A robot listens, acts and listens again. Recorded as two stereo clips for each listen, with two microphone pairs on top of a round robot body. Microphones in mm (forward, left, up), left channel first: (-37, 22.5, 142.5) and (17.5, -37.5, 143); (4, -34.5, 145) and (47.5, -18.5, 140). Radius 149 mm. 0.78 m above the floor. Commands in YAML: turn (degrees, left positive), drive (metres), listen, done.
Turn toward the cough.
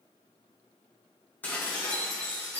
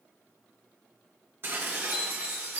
listen: true
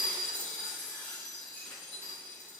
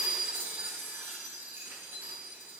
listen: true
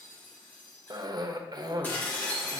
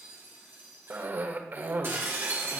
turn: -15
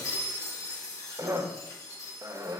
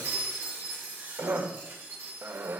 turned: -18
done: "Facing the cough."